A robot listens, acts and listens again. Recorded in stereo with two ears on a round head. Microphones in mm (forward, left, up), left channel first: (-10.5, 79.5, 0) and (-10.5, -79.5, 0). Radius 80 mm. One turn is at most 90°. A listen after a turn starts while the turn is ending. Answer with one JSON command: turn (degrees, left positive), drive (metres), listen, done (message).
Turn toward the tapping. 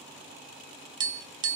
{"turn": -25}
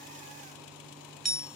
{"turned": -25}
{"done": "Found it: tapping, straight ahead."}